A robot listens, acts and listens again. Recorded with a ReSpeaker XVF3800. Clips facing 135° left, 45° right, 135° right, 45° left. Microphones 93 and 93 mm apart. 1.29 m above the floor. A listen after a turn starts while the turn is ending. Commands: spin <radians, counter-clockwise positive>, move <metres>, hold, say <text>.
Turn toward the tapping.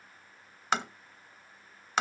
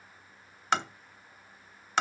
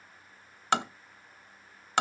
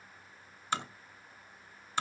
spin -2.44
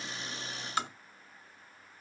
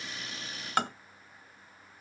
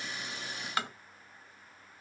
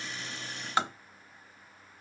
spin -0.35
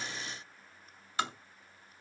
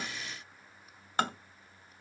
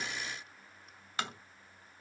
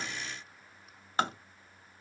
spin -0.17
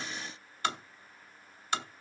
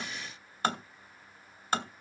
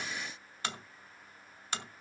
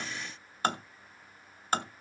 say Found it: tapping, straight ahead, under 1 m away.